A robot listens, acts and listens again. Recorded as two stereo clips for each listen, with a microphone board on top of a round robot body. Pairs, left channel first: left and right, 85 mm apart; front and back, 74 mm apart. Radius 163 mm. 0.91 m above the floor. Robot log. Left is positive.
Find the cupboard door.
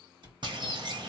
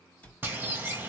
note: The cupboard door: 70° right.
cmd yaw -70
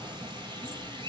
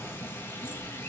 cmd idle
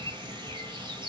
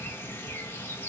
cmd idle
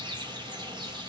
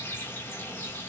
end: Facing where the cupboard door came from. I can't hear it now.